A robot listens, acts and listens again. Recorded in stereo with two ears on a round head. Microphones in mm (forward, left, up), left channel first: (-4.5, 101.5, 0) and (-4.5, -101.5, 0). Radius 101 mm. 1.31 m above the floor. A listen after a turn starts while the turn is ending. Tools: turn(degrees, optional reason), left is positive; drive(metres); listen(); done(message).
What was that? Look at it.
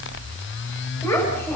turn(degrees=30)
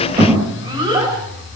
turn(degrees=-20, reason="So it is at 20° right.")
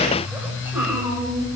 turn(degrees=-10, reason="The child speaking is now 10° right.")
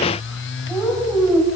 done("Found it: a child speaking, straight ahead.")